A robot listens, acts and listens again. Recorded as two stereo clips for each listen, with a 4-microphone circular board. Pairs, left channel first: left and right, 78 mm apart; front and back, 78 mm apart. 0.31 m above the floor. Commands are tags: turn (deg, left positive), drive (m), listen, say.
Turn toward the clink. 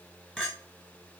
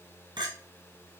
<turn deg="170"/>
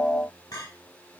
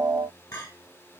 <turn deg="45"/>
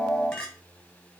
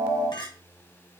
<turn deg="10"/>
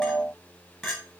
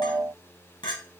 <say>Found it: a clink, straight ahead, 1 to 2 m away.</say>